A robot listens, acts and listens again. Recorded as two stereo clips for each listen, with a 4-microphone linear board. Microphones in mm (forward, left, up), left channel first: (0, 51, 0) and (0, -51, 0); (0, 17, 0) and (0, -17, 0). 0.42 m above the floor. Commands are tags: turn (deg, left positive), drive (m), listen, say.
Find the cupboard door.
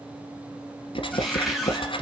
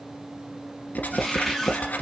<turn deg="30"/>
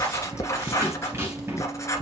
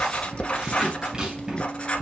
<turn deg="-30"/>
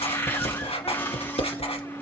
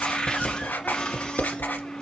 <turn deg="25"/>
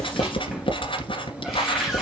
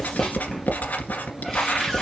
<say>Found it: a cupboard door, straight ahead.</say>